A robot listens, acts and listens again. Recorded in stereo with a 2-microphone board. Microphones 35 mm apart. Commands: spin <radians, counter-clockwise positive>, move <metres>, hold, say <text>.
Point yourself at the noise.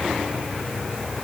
hold
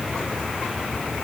hold
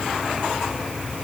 say I can't make out anything.